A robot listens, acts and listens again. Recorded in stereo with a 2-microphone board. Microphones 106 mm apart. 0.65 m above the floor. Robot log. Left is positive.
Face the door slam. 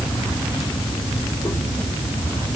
cmd idle
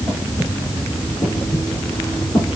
cmd idle
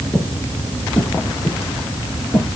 end: I can't make out a door slam, only breathing.